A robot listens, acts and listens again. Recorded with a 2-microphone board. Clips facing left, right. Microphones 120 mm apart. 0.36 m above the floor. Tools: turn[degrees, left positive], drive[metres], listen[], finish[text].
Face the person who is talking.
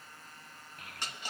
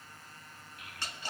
Thought: The child speaking: about 45° left or 135° left.
Action: turn[45]
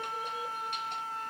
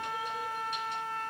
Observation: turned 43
Action: listen[]
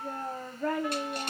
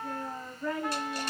Thought: So it is at 90° left.
Action: turn[90]
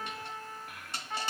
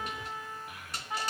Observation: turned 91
Action: finish[Facing the child speaking.]